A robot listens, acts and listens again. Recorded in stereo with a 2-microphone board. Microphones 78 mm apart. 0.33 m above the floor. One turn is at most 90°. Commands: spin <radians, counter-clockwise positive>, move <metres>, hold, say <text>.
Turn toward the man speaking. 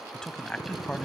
spin 0.52
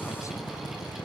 hold
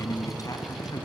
spin 1.57
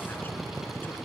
spin 0.70
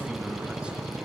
spin -0.26
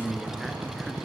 say Facing the man speaking, 2 to 4 m away.